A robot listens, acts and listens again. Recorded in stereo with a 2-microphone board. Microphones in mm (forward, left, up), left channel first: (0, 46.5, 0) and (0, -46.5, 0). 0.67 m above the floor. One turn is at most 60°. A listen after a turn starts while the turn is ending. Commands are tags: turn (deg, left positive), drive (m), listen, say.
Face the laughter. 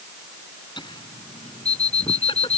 <turn deg="60"/>
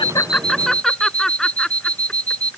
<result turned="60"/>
<say>Facing the laughter.</say>